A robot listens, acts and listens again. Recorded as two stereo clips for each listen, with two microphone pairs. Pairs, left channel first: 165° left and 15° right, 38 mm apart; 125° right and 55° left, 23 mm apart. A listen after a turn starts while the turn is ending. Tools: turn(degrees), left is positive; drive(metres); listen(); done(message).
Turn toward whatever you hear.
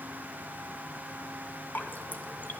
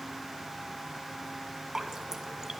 turn(degrees=120)
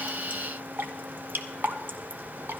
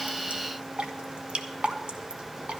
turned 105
turn(degrees=15)
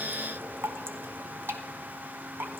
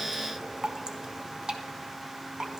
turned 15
done("Facing the dripping.")